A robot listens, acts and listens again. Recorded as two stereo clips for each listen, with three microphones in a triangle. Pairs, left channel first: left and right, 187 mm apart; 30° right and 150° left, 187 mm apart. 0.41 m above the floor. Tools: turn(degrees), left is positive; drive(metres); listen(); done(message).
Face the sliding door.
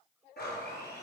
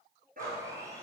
listen()
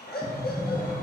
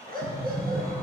turn(degrees=180)
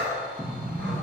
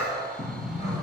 turn(degrees=-15)
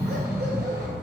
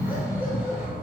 done("Facing the sliding door, 2 to 4 m away.")